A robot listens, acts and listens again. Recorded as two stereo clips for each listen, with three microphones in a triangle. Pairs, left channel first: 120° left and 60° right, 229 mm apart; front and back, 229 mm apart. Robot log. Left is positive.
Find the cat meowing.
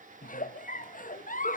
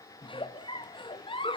cmd idle
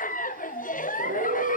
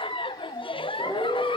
note: The cat meowing: 85° right.
cmd yaw -85
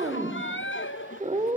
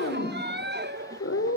end: Found it: a cat meowing, straight ahead.